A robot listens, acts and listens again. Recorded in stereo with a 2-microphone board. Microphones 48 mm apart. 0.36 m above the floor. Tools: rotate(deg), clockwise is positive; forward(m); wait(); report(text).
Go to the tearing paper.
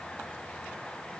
wait()
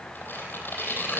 rotate(-45)
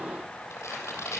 rotate(-90)
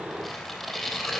forward(1.0)
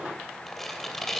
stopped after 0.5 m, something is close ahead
rotate(-10)
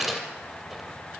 report("Blocked. The tearing paper is further on, straight ahead.")